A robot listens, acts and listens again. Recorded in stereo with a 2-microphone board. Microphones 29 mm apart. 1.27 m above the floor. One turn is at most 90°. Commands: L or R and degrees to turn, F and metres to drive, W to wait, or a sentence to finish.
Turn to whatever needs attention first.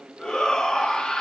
L25
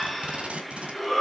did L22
Found it: a shout, straight ahead, 2 to 4 m away.